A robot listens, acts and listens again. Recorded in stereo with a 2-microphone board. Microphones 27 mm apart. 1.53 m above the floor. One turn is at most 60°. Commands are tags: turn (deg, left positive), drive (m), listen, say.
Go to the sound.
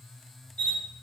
<turn deg="55"/>
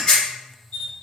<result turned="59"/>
<turn deg="45"/>
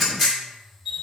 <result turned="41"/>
<drive m="1.0"/>
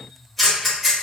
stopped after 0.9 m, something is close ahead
<turn deg="20"/>
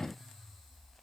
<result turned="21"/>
<listen/>
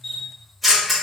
<say>Arrived at the camera shutter, straight ahead.</say>